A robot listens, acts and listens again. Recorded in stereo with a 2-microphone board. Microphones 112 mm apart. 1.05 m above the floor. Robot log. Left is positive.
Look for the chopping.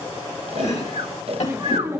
cmd yaw +90
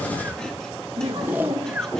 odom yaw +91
cmd idle
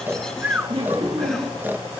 cmd idle
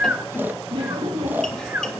end: Facing where the chopping came from. I can't hear it now.